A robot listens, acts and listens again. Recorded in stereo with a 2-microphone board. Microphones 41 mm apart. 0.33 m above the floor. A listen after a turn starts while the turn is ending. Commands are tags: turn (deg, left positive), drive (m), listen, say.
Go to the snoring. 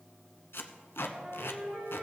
<listen/>
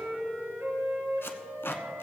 <listen/>
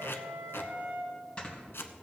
<turn deg="25"/>
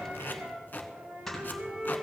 <drive m="1.0"/>
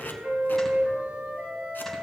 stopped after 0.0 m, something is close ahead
<listen/>
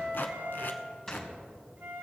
<turn deg="10"/>
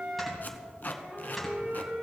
<say>Blocked. The snoring is further on, straight ahead.</say>